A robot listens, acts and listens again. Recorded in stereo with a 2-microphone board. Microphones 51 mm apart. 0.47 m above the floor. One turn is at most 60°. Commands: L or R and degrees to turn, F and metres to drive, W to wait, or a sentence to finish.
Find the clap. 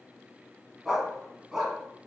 W
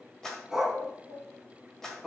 L30
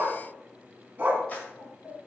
W
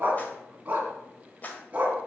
L60
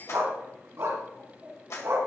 L60
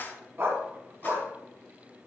L45
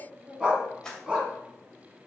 L15
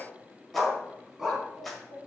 Facing the clap, 1 to 2 m away.